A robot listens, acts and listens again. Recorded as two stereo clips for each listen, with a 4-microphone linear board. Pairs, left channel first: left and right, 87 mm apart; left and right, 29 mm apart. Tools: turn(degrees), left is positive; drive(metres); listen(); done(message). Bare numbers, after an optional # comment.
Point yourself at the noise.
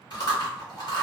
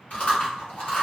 # The chewing: about 55° left or 125° left.
turn(55)
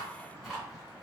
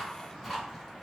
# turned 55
done("Found it: chewing, straight ahead, 1 to 2 m away.")